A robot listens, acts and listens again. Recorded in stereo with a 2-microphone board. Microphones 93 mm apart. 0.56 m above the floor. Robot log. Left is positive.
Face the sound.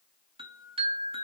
note: The chime: about 75° right or 105° right.
cmd yaw -75
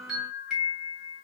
end: Facing the chime.